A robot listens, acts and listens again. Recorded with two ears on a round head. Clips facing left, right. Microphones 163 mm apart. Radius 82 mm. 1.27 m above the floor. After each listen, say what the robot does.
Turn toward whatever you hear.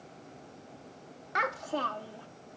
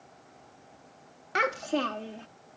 Turn 30° right.
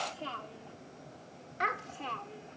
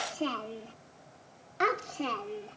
Turn 130° right.
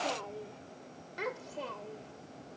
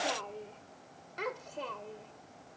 Facing the child speaking.